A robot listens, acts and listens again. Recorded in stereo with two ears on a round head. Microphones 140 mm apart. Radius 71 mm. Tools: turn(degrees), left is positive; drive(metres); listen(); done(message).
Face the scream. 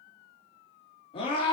turn(degrees=35)
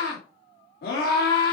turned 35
turn(degrees=105)
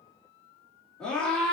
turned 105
done("Found it: a scream, straight ahead, 2 to 4 m away.")